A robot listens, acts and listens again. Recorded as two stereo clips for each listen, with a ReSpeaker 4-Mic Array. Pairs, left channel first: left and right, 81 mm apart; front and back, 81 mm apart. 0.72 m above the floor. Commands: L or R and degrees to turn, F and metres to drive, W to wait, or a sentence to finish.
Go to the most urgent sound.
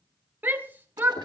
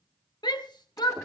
R25
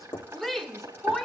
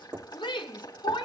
F1.0
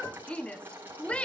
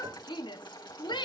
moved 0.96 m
L15
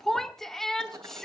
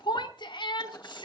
F1.0
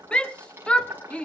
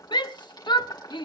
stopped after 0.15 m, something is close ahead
L15
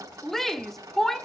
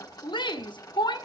I am next to the shout.